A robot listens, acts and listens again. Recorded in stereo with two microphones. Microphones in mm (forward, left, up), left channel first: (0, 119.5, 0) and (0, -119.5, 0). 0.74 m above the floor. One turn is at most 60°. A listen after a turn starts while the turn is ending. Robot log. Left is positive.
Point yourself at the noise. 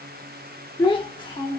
note: The child speaking: about 20° left or 160° left.
cmd yaw +20
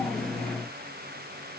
cmd idle
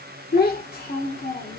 note: So it is at 140° left.
cmd yaw +60
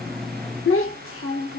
note: The child speaking is now 60° left.
cmd yaw +60
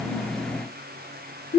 note: The child speaking is now 30° left.
cmd yaw +30
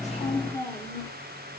note: The child speaking is now 10° left.
cmd yaw +10
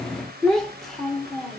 end: Found it: a child speaking, straight ahead, under 1 m away.